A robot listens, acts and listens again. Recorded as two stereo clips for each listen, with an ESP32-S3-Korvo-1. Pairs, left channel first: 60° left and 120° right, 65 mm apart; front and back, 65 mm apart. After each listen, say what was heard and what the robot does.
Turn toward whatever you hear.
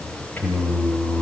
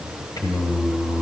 Facing the singing, 2 to 4 m away.